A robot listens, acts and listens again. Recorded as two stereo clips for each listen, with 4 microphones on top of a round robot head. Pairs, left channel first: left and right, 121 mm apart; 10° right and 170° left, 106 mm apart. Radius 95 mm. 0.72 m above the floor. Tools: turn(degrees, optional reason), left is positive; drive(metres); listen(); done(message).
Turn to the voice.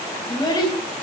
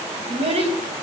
turn(degrees=145, reason="The child speaking: 145° left.")
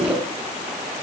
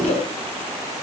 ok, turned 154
turn(degrees=-10, reason="Nothing new. It was at 10° right.")
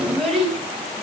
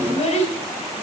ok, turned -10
done("Found it: a child speaking, straight ahead.")